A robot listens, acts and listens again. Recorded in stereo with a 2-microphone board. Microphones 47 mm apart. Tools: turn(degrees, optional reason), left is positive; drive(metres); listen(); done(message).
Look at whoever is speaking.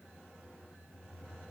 listen()
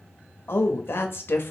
turn(degrees=55, reason="The woman speaking: about 55° left or 125° left.")
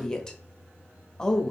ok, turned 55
turn(degrees=15, reason="So it is at 15° left.")
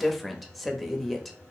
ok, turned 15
done("Found it: a woman speaking, straight ahead.")